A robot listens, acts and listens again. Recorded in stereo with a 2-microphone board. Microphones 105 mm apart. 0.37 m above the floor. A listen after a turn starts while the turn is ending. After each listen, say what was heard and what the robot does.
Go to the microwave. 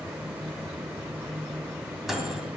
Turn 30° right.
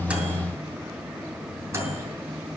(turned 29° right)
So it is at 150° right. Turn 150° right.
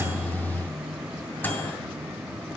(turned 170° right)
The microwave is now 20° left. Turn 20° left.
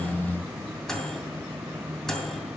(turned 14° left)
Drive 1.0 m forward.
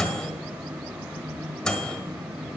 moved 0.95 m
The microwave is now 10° left. Turn 10° left.
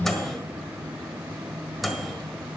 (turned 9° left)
Drive 1.0 m forward.
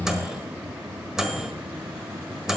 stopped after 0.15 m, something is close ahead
I am next to the microwave.